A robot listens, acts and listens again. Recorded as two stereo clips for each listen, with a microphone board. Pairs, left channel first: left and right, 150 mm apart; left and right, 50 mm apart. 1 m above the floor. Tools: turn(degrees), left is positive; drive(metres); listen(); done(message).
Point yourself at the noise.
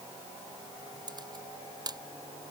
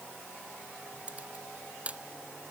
turn(degrees=-30)
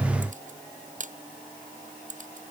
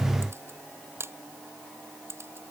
turn(degrees=-120)
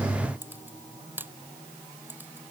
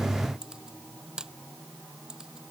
turn(degrees=-15)
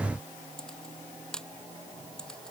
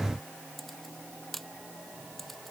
done("Facing the camera shutter.")